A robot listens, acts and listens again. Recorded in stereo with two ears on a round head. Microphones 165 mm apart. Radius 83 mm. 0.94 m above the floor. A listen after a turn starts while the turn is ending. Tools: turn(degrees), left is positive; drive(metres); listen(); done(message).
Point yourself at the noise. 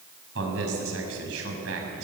turn(degrees=-90)
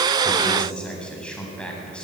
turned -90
done("Found it: a man speaking, straight ahead.")